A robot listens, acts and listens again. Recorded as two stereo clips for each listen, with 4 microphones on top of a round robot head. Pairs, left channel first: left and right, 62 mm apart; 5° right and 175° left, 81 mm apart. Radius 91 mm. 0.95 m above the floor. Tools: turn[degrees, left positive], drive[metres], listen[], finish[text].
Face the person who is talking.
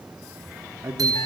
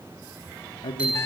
Thought: The man speaking: 35° right.
Action: turn[-35]
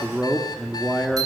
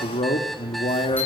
Action: finish[Found it: a man speaking, straight ahead, 1 to 2 m away.]